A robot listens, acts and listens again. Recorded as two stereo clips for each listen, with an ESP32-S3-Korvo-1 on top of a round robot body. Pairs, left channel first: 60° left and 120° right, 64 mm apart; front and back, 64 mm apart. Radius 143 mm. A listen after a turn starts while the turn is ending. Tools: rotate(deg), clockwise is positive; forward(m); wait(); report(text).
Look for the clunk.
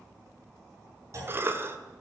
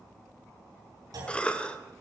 rotate(160)
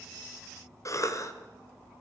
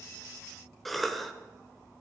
report("Facing where the clunk came from. I can't hear it now.")